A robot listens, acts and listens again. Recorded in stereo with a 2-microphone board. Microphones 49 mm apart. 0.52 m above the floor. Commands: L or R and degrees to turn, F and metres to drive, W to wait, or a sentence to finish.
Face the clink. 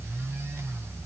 W
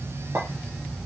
R65
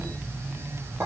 R50
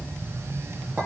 R30
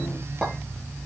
Facing the clink.